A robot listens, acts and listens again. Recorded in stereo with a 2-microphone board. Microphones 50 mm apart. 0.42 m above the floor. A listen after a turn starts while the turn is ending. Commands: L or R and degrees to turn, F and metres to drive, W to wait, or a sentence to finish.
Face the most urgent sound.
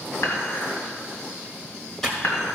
W
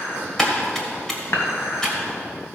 W
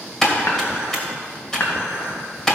I can't make out anything urgent, only typing on a keyboard and dishes clattering.